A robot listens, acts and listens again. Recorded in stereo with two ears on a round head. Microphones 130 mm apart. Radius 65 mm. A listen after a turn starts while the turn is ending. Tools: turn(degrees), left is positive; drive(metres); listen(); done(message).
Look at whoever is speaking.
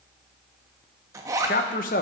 turn(degrees=60)
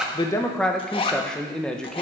done("Facing the man speaking.")